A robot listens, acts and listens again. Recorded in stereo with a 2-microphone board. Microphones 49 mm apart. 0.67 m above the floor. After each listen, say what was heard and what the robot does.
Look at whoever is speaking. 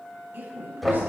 The woman speaking: about 50° right or 130° right. Turn 50° right.
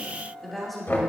Facing the woman speaking.